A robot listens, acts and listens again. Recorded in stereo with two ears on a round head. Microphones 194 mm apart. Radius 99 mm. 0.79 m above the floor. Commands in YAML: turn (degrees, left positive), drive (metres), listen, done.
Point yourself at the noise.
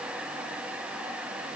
listen: true
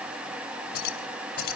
turn: 50
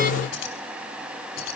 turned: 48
turn: 80
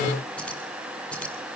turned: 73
done: "Found it: keys jangling, straight ahead, over 4 m away."